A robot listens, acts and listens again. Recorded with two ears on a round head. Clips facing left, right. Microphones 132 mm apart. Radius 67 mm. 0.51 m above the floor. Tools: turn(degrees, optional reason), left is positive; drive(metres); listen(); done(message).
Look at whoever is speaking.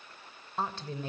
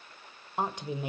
turn(degrees=-30)
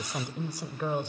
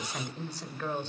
turn(degrees=15, reason="So it is at 15° left.")
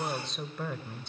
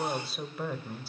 done("Facing the woman speaking.")